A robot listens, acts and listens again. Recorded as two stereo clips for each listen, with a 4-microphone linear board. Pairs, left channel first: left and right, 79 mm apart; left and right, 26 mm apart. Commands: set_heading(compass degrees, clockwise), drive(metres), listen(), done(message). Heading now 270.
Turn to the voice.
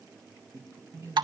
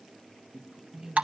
set_heading(310)
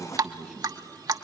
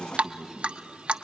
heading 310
done("Facing the man speaking, 2 to 4 m away.")